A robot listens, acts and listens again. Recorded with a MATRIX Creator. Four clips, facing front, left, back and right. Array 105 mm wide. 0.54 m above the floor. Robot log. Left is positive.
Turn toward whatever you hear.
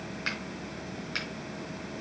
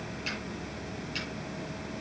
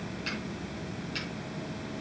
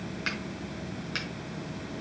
note: The finger snap: 50° right.
cmd yaw -50
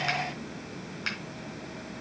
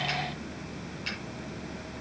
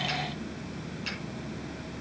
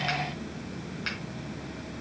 note: The finger snap is now 35° right.
cmd yaw -35
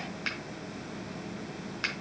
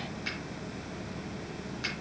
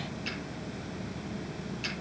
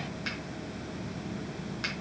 note: The finger snap is now 10° right.
cmd yaw -10
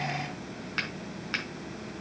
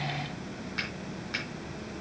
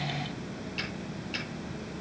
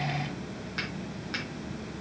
end: Facing the finger snap.